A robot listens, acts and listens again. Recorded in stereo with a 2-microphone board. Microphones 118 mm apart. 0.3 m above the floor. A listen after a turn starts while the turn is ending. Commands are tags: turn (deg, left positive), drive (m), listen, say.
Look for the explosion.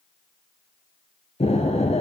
<turn deg="60"/>
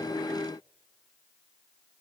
<listen/>
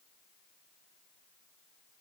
<say>I heard an explosion, but can't make it out now. It was about straight ahead or 60° left.</say>